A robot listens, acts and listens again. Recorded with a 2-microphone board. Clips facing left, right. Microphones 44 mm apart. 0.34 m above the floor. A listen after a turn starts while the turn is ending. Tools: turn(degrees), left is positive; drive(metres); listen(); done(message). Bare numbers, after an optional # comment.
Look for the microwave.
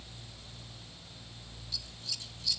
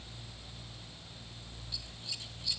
listen()
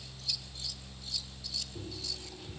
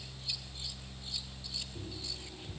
listen()
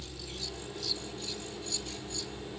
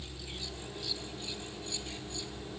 # The microwave: about 25° left or 155° left.
turn(25)
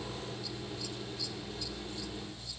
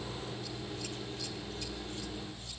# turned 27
listen()
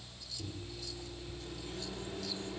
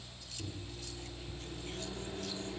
done("Found it: a microwave, straight ahead, over 4 m away.")